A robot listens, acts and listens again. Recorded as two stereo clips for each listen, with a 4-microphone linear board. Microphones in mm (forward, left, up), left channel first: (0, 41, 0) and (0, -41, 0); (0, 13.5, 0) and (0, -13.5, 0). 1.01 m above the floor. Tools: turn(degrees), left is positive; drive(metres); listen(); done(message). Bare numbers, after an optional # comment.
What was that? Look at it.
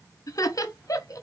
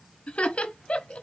# The laughter: about 45° left or 135° left.
turn(45)
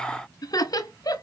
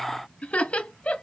# So it is at 75° left.
turn(75)
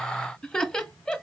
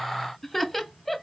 # The laughter is now 10° left.
turn(10)
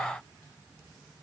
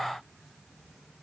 listen()
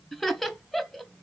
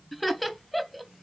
done("Facing the laughter, under 1 m away.")